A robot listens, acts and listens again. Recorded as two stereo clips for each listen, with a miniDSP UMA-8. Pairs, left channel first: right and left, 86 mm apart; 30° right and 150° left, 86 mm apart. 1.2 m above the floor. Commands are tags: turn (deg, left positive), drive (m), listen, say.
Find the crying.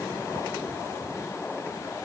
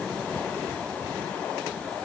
<listen/>
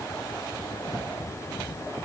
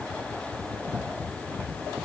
<listen/>
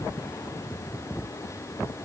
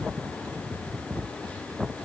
<say>I can't make out crying.</say>